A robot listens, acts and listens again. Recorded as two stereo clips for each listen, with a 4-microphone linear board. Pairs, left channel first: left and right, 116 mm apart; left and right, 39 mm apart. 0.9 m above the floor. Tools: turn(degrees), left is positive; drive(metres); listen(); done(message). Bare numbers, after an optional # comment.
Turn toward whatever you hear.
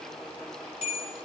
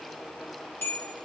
# The bell: about 70° left or 110° left.
turn(70)
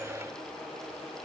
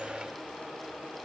listen()
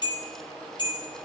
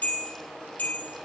# So it is at 40° left.
turn(40)
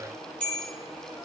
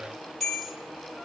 # The bell is now 10° left.
turn(10)
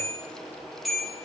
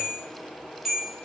done("Found it: a bell, straight ahead, 2 to 4 m away.")